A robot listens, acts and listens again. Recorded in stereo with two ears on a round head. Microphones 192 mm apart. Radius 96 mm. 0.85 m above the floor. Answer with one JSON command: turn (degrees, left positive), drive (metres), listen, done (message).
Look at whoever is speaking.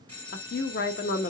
{"turn": 50}
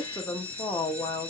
{"turn": 20}
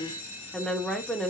{"done": "Facing the woman speaking."}